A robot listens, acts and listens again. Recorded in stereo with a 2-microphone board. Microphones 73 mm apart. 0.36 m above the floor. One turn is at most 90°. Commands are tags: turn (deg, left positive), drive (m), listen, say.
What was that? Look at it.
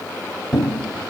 <turn deg="30"/>
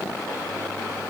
<listen/>
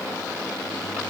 <say>I heard a thud, but can't make it out now. It was about 20° right or 140° left.</say>